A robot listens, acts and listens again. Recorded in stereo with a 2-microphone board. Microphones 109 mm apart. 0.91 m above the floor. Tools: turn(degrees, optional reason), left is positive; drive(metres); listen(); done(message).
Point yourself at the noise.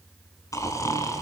turn(degrees=30, reason="The snoring: about 30° left or 150° left.")
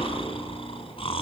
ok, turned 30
turn(degrees=125, reason="So it is at 125° left.")
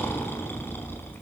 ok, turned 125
turn(degrees=20, reason="The snoring is now 20° left.")
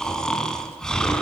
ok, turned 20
done("Facing the snoring.")